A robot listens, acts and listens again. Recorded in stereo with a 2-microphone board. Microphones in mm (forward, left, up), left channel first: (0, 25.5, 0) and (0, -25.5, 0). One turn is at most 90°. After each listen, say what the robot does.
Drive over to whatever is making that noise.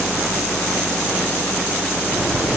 Turn 30° left.
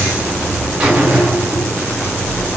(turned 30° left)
Turn 25° right.
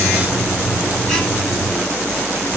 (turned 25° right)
Turn 10° left.
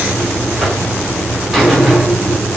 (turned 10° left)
Drive 1.0 m forward.
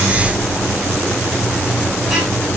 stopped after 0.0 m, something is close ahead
Turn 15° right.
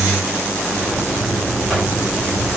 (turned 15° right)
Something is in my way. I am facing the buzzer but have not reached it.